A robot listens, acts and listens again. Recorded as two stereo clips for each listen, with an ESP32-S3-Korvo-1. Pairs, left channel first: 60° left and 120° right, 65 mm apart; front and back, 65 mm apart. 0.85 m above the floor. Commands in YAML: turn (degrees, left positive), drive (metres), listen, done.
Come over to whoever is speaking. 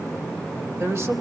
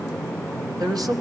turn: -165
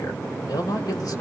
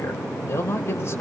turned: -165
turn: 45
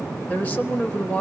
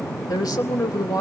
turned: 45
drive: 1.0
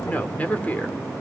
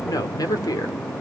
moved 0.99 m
drive: 1.0
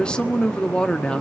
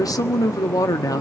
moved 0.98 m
turn: -15
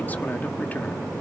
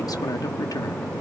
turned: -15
listen: true
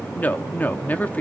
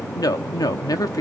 drive: 1.0
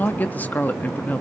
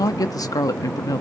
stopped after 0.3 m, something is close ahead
done: "Arrived at the woman speaking, straight ahead."